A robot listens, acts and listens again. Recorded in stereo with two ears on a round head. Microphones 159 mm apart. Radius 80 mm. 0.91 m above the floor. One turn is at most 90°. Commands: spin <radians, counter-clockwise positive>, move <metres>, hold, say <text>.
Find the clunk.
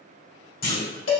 spin 0.96
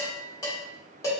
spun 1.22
hold
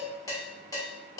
say I heard a clunk, but can't make it out now. It was about 15° right or 55° left.